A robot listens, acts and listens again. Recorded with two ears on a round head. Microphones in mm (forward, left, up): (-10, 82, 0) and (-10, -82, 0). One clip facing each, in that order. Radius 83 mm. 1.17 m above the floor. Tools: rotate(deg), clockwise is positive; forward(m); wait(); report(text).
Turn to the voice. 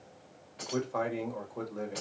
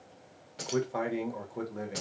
rotate(30)
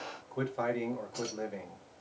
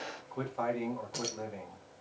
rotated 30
rotate(-15)
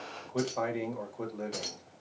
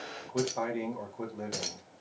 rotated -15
report("Found it: a man speaking, straight ahead, 1 to 2 m away.")